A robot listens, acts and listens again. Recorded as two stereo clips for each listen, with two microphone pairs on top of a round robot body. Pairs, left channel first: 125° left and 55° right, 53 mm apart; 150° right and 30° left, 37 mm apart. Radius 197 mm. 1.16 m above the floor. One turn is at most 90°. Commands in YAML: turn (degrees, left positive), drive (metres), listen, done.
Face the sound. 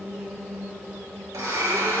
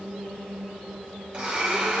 turn: -35
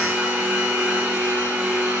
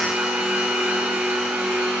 done: "Facing the blender."